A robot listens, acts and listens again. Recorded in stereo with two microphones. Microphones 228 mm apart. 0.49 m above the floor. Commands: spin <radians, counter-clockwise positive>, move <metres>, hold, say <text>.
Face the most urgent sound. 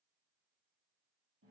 hold
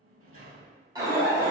spin -0.26
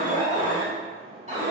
spin -2.62
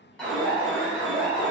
say Facing the alarm, 1 to 2 m away.